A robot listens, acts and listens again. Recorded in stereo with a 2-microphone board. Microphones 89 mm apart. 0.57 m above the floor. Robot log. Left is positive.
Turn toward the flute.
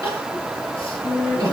cmd yaw -90
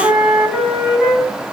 end: Facing the flute.